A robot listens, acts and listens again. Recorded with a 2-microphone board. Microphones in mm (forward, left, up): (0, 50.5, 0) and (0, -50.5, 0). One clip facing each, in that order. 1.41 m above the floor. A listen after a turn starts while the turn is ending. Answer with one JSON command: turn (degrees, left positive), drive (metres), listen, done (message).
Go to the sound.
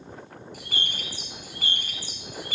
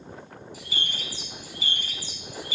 {"turn": 55}
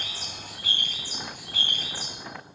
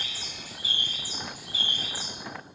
{"turn": 65}
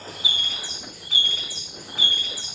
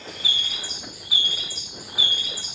{"turn": -10}
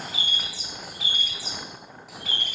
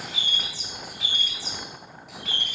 {"drive": 1.0}
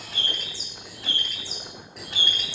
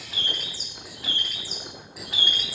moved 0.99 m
{"drive": 1.0}
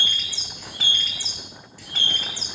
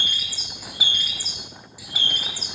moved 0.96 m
{"turn": -10}
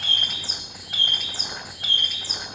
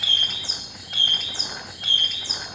{"drive": 1.0}
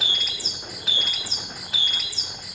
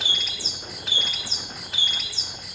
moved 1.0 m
{"drive": 1.0}
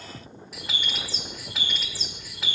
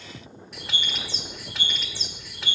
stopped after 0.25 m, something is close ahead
{"done": "Arrived at the bird, straight ahead."}